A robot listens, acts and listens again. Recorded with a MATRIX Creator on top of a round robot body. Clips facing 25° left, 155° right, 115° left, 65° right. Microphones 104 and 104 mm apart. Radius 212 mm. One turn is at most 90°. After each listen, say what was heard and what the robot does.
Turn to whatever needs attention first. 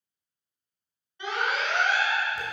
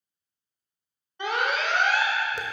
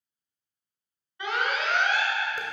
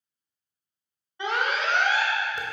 The alarm: 125° right. Turn 90° right.
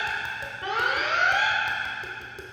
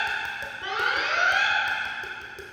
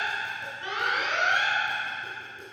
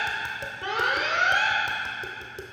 The alarm is now 25° right. Turn 25° right.
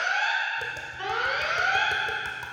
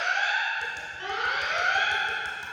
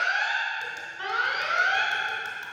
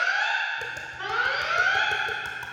The alarm is now 20° left. Turn 20° left.
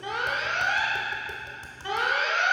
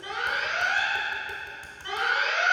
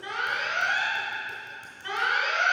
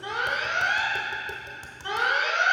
Facing the alarm, 1 to 2 m away.